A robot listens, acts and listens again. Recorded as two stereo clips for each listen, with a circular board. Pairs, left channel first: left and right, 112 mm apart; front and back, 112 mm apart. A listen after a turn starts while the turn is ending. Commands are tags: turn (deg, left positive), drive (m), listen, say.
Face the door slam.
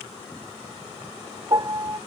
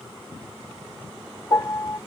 <listen/>
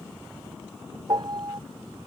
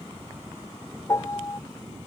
<listen/>
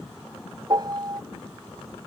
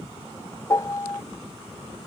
<say>I can't make out a door slam, only a piano.</say>